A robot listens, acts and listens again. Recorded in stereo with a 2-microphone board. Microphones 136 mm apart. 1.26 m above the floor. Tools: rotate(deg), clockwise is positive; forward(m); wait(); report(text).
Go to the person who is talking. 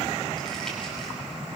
wait()
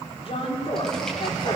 rotate(-50)
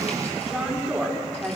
forward(1.0)
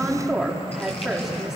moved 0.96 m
forward(1.0)
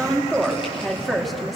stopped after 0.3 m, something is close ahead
report("Something is in my way. I am facing the woman speaking but have not reached it.")